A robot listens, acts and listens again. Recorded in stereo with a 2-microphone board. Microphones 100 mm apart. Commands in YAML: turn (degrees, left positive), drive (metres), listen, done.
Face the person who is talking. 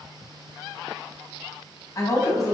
turn: 35
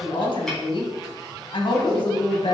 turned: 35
turn: 105
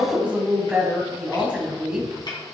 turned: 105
turn: -10
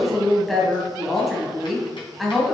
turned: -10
done: "Found it: a woman speaking, straight ahead."